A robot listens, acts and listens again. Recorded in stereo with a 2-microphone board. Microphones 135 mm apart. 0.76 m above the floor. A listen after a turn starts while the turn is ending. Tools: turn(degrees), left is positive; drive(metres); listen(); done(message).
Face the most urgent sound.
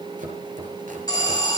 turn(degrees=30)
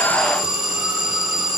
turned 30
done("Found it: an alarm, straight ahead, over 4 m away.")